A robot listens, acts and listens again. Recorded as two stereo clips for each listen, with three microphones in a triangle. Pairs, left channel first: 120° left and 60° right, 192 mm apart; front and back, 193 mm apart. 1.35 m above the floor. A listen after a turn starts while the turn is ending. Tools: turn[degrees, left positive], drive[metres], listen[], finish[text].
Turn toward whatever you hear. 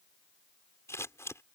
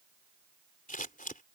Thought: The scissors: 45° left.
Action: turn[45]
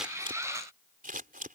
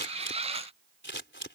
Thought: The scissors is now 15° right.
Action: turn[-15]
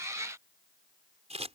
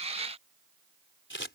Action: finish[Found it: scissors, straight ahead.]